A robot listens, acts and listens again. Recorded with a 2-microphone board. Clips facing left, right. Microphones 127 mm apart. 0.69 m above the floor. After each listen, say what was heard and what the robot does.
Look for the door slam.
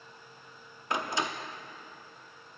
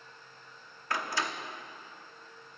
The door slam: about 20° left or 160° left. Turn 20° left.
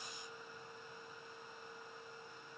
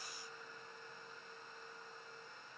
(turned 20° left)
Keep listening.
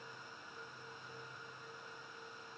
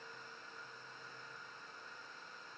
I heard a door slam, but can't make it out now. It was about straight ahead or 140° left.